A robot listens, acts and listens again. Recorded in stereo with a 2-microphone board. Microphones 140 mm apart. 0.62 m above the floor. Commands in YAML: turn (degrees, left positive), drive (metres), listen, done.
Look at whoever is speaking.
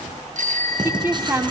turn: -20
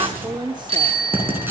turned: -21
turn: -140
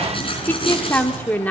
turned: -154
turn: 15
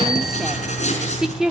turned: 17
done: "Facing the woman speaking."